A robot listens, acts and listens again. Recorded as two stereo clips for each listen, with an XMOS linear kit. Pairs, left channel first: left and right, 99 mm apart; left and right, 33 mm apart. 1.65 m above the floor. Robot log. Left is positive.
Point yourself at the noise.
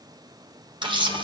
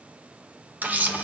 note: The camera shutter: about 60° right or 120° right.
cmd yaw -60
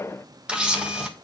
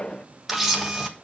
note: So it is at 10° right.
cmd yaw -10
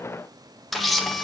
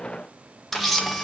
end: Facing the camera shutter, 1 to 2 m away.